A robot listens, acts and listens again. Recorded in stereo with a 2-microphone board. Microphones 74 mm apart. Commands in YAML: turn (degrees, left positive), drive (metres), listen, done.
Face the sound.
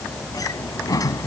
turn: 55
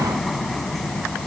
done: "Facing the sliding door."